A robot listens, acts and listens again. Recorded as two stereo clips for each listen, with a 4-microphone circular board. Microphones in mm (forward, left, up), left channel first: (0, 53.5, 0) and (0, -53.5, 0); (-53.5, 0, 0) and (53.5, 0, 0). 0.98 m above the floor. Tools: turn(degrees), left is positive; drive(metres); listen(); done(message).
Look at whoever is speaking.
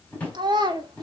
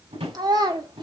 turn(degrees=-45)
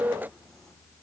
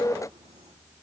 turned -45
listen()
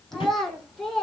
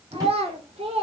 done("Found it: a child speaking, straight ahead, 2 to 4 m away.")